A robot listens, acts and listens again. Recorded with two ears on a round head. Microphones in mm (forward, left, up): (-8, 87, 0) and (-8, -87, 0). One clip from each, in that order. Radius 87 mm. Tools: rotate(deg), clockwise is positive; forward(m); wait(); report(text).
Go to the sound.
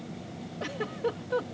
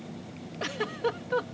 rotate(40)
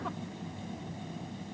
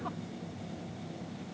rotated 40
wait()
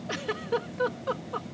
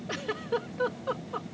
forward(1.0)
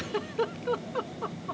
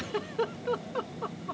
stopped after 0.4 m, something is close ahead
report("Something is in my way. I am facing the giggle but have not reached it.")